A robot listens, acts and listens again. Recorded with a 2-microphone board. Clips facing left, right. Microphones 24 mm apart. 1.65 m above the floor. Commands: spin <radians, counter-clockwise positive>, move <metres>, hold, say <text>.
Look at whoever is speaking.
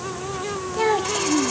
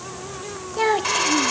spin -0.52
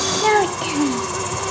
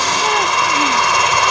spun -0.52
spin 0.35
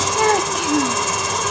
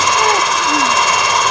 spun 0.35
hold
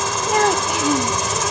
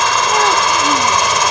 hold
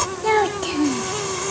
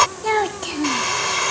say Facing the child speaking.